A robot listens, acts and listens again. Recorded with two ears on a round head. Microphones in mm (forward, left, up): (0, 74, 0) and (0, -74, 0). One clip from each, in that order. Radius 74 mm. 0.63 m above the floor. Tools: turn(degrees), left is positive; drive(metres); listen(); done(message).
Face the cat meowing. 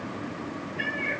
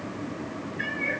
turn(degrees=60)
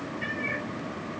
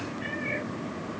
turn(degrees=65)
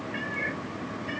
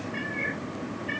turn(degrees=20)
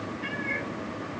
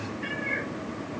turn(degrees=10)
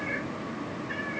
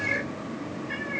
done("Found it: a cat meowing, straight ahead, over 4 m away.")